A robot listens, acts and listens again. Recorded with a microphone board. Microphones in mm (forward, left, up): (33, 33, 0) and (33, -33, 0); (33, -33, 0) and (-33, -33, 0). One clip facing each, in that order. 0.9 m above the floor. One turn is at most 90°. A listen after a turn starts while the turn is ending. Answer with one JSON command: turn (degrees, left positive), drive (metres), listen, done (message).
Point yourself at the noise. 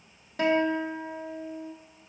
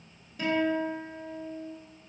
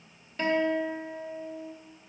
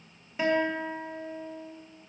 {"turn": 90}
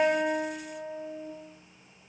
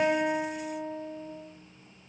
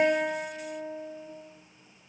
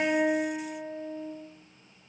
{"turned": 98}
{"done": "Facing the guitar, 1 to 2 m away."}